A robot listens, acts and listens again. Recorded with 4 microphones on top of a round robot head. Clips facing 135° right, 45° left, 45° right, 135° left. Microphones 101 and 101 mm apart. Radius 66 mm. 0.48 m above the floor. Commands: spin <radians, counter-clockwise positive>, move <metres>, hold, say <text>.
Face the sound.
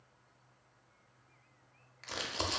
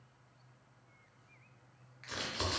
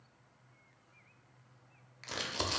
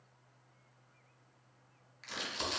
spin -1.40
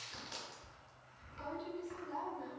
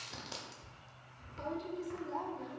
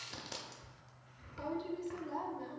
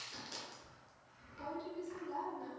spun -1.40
say Found it: crumpling, straight ahead.